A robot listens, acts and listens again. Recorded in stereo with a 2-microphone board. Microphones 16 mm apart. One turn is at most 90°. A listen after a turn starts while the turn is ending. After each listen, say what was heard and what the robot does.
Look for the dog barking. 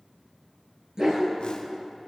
The dog barking: about 45° right or 135° right. Turn 45° right.
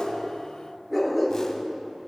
Facing the dog barking, over 4 m away.